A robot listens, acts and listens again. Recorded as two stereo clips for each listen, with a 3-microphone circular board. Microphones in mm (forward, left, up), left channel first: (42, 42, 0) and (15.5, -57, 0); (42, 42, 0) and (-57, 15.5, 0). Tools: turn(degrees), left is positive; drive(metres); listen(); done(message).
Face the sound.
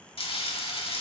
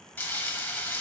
turn(degrees=90)
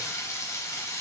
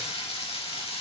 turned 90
turn(degrees=20)
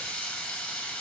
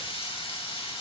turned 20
done("Facing the frying.")